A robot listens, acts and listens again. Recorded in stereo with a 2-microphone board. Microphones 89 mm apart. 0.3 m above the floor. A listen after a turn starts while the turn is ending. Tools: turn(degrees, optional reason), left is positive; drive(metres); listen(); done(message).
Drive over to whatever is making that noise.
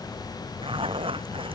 turn(degrees=-90)
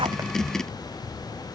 listen()
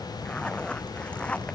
turn(degrees=15, reason="The zipper is now 15° left.")
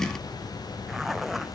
drive(metres=1.0)
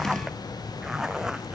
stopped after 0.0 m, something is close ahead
done("Blocked. The zipper is further on, straight ahead.")